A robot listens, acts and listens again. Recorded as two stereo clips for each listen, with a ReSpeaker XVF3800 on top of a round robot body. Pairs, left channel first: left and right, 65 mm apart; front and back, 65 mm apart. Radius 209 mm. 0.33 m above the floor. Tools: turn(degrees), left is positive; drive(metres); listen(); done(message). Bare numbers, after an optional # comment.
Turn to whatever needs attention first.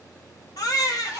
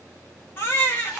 # The baby crying: 60° left.
turn(60)
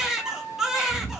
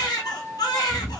done("Found it: a baby crying, straight ahead.")